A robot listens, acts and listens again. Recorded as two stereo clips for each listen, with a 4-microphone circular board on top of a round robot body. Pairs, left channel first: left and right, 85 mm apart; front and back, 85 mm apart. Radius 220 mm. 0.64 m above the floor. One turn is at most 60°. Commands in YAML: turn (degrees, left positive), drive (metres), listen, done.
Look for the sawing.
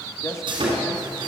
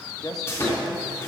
turn: -60
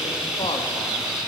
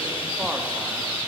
done: "Facing the sawing."